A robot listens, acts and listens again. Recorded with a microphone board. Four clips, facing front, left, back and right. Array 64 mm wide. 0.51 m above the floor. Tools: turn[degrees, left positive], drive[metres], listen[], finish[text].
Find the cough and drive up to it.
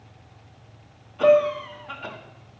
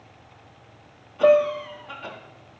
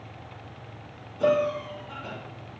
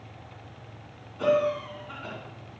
Thought: The cough: 40° left.
Action: turn[40]
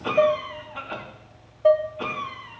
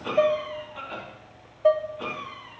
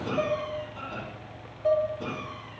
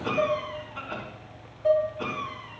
Action: drive[1.0]
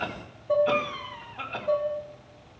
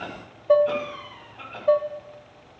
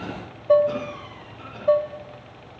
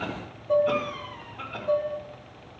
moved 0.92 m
Action: drive[1.0]
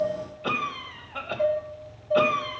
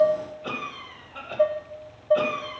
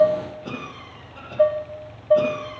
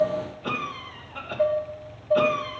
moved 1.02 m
Action: drive[1.0]
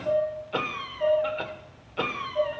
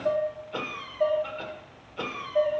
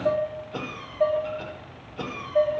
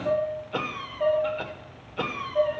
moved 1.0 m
Thought: The cough is now 15° right.
Action: turn[-15]
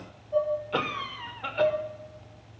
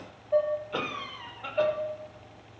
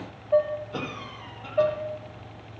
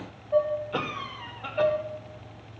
Action: drive[1.0]
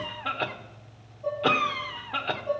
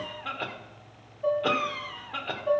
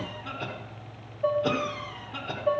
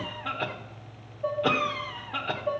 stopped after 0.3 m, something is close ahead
Action: finish[Arrived at the cough, straight ahead.]